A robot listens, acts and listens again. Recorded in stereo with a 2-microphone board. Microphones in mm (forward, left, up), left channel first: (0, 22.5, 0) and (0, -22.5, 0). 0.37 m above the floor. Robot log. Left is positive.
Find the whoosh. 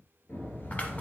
note: The whoosh: about 45° left or 135° left.
cmd yaw +45
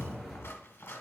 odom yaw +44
end: Facing the whoosh.